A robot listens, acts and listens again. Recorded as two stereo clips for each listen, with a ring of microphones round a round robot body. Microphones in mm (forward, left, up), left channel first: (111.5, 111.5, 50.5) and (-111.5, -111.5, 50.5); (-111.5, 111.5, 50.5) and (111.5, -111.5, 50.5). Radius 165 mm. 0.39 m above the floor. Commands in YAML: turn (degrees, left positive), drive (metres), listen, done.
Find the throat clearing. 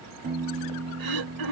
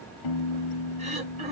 turn: -115
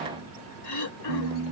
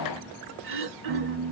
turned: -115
turn: 10
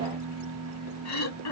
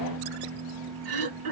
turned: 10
done: "Found it: throat clearing, straight ahead, over 4 m away."